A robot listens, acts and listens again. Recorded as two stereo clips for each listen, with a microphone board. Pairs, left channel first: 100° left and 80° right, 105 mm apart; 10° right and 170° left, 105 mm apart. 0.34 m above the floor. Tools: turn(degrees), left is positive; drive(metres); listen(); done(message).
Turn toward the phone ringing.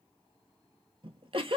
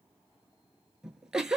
listen()
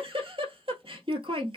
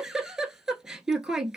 listen()
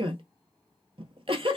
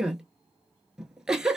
done("I can't make out a phone ringing to turn to.")